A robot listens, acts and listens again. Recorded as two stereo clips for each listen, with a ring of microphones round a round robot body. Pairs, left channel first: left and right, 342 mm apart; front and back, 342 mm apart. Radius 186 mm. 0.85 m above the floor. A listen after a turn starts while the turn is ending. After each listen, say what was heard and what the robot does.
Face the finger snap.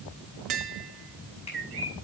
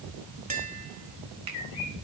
The finger snap: 165° left. Turn 165° left.
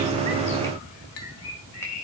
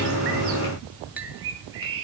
Keep listening.
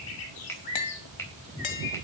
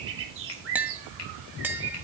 Facing the finger snap.